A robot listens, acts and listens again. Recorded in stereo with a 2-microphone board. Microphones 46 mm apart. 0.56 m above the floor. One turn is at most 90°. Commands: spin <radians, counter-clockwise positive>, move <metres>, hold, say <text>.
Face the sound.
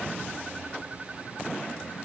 hold
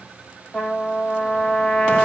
spin 0.52
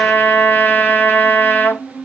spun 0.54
spin 1.57
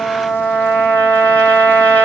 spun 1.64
spin 0.70
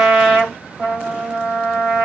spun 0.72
say Facing the trumpet.